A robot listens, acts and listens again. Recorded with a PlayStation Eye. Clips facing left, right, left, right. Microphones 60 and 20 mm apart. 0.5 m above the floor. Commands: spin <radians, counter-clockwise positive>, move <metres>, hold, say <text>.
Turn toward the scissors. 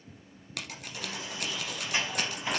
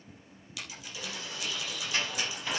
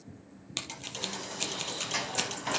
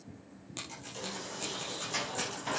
spin 1.05
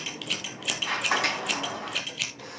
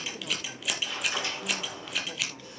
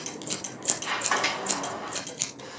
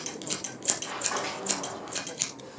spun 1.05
say Found it: scissors, straight ahead, 2 to 4 m away.